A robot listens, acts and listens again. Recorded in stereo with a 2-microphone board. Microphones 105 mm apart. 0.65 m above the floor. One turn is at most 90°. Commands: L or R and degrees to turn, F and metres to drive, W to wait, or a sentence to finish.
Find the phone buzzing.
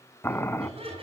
R75
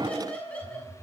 R30
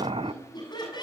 W
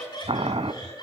Facing the phone buzzing.